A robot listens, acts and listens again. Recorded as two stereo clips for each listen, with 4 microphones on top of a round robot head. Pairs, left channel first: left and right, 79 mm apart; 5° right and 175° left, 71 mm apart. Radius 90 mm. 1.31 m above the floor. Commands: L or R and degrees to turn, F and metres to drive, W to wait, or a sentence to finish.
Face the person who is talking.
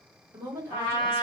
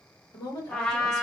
R30
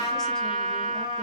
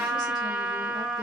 W
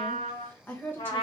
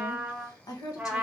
L25
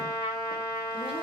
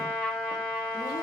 W
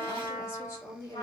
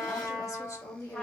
L40
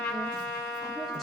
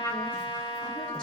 W
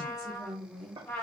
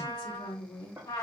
Found it: a woman speaking, straight ahead.